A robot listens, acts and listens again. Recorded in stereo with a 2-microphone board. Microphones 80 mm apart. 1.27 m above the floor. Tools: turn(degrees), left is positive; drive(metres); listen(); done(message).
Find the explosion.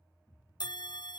turn(degrees=70)
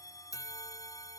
listen()
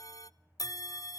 done("I heard an explosion, but can't make it out now. It was about straight ahead or 40° left.")